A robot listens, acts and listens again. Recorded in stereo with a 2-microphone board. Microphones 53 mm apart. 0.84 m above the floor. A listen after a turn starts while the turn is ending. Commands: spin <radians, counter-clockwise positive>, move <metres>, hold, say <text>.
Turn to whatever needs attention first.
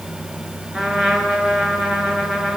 hold
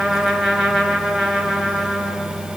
hold
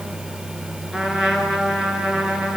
say I can't make out anything urgent to turn to.